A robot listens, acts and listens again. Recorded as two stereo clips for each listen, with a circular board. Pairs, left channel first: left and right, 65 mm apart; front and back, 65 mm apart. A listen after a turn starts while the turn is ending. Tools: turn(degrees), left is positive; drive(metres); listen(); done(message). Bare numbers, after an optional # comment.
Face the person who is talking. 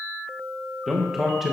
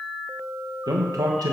# The man speaking: 175° right.
turn(-175)
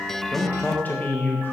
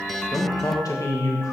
# The man speaking is now 30° left.
turn(30)
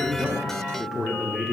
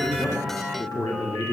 done("Found it: a man speaking, straight ahead, 1 to 2 m away.")